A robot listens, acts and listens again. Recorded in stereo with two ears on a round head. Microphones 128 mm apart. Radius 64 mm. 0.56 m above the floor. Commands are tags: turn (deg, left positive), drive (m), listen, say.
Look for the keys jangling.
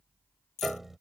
<turn deg="50"/>
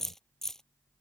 <say>Facing the keys jangling.</say>